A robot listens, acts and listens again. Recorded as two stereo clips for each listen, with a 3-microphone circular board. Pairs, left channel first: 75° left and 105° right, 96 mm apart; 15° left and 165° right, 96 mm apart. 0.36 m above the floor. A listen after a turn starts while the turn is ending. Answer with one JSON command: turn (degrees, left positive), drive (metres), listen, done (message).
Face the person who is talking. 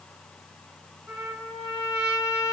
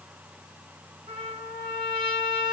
{"listen": true}
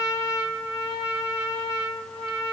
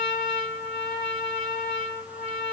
{"listen": true}
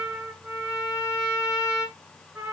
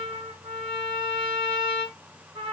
{"done": "I can't make out anyone speaking to turn to."}